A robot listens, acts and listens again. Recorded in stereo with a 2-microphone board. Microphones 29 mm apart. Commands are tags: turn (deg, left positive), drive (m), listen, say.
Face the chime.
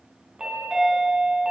<turn deg="-35"/>
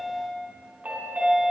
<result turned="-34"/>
<turn deg="-110"/>
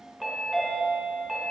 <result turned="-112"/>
<say>Facing the chime, 2 to 4 m away.</say>